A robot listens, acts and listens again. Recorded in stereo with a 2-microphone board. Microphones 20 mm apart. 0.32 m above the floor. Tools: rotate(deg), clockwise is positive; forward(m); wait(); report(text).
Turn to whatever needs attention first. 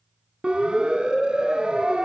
rotate(65)
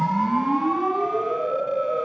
rotate(10)
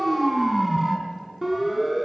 report("Facing the siren, 2 to 4 m away.")